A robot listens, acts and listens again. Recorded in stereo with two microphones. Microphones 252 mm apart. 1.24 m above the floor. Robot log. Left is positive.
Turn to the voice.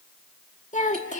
note: The child speaking: about 30° left or 150° left.
cmd yaw +30
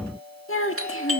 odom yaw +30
note: So it is at 125° left.
cmd yaw +125
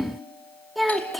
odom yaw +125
end: Found it: a child speaking, straight ahead.